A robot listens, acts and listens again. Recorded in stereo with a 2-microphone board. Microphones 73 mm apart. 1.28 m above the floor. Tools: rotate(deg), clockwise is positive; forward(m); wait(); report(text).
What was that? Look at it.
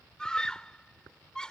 rotate(-30)
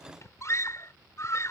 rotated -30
rotate(-135)
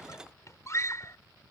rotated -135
rotate(-45)
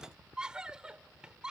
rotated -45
rotate(10)
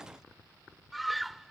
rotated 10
report("Found it: a scream, straight ahead.")